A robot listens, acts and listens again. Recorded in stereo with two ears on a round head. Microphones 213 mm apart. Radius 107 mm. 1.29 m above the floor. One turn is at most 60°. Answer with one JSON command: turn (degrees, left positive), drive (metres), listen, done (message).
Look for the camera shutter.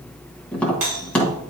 {"listen": true}
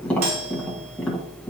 {"listen": true}
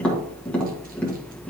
{"done": "I can't make out a camera shutter, only a doorbell and tapping."}